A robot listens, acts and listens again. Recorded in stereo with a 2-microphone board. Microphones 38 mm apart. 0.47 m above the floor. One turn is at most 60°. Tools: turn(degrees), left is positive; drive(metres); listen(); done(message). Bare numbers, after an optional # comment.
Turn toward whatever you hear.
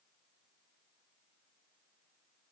listen()
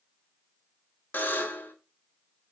# The buzzer: about 55° left or 125° left.
turn(55)
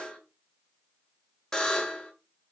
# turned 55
# So it is at 20° left.
turn(20)
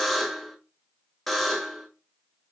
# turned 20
done("Found it: a buzzer, straight ahead.")